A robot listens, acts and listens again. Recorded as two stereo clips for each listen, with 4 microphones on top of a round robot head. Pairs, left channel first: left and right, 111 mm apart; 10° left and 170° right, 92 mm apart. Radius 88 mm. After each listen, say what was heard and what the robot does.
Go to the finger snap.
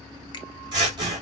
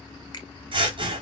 The finger snap: 40° left. Turn 40° left.
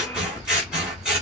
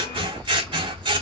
Keep listening.
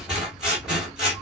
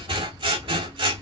Keep listening.
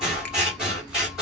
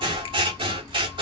I heard a finger snap from this way, but can't make it out now. I did not reach it.